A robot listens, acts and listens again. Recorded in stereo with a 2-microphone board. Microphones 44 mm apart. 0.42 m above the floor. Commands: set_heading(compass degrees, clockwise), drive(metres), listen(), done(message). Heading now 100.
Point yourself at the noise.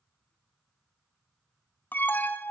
set_heading(55)
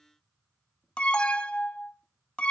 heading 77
set_heading(52)
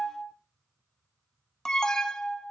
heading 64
set_heading(49)
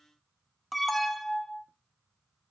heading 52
done("Found it: an alarm, straight ahead, 1 to 2 m away.")